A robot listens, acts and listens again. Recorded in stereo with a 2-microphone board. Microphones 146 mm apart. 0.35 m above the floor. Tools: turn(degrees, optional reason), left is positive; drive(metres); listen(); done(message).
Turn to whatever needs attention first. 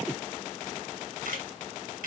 listen()
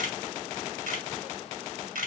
listen()
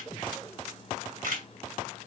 done("I can't make out anything urgent to turn to.")